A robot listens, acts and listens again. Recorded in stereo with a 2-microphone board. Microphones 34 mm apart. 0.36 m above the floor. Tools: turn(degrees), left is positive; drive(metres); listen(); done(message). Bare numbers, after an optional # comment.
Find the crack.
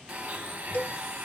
listen()
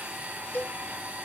listen()
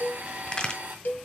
# The crack: about 30° left or 150° left.
turn(30)
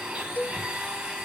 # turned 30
listen()
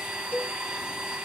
done("I heard a crack, but can't make it out now. It was about straight ahead or 120° left.")